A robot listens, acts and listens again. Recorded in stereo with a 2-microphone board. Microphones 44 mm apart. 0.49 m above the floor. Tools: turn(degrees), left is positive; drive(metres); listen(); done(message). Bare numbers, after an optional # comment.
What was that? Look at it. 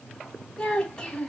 turn(30)
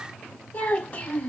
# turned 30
# So it is at 140° left.
turn(140)
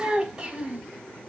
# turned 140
# The child speaking is now 15° right.
turn(-15)
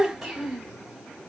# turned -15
done("Found it: a child speaking, straight ahead.")